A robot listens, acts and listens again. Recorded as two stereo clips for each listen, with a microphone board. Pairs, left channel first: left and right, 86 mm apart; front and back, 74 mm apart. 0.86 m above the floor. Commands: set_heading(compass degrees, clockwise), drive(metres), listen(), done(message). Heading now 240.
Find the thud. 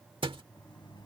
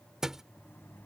set_heading(335)
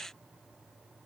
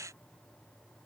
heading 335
done("I heard a thud from this way, but can't make it out now.")